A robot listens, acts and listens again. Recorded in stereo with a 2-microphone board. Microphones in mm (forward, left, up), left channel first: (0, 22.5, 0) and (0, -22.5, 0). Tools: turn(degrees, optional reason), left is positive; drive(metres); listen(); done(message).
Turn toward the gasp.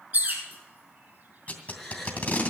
turn(degrees=30)
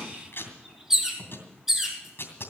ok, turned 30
listen()
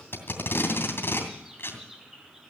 done("I heard a gasp, but can't make it out now. It was about 25° right or 145° left.")